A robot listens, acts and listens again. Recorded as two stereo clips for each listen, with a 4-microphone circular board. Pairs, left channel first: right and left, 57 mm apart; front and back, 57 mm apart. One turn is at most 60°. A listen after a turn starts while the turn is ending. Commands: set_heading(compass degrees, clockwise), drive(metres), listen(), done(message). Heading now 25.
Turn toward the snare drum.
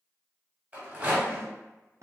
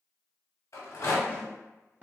set_heading(325)
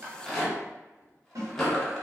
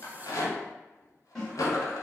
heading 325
set_heading(265)
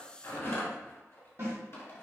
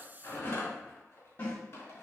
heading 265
set_heading(220)
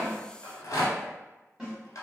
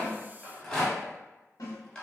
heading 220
set_heading(210)
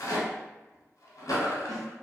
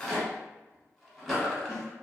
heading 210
listen()
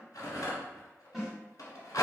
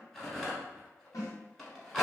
done("Found it: a snare drum, straight ahead, 1 to 2 m away.")